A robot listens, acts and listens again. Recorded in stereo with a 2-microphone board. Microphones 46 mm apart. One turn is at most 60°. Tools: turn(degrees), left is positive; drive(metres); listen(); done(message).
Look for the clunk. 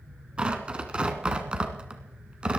listen()
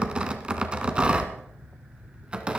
listen()
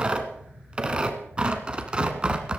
done("I can't make out a clunk, only tearing paper.")